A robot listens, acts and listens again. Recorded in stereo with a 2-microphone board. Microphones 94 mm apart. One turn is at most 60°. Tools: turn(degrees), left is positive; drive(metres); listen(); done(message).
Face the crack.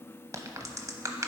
turn(degrees=-35)
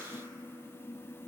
listen()
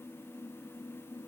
done("I heard a crack, but can't make it out now. It was about straight ahead or 110° right.")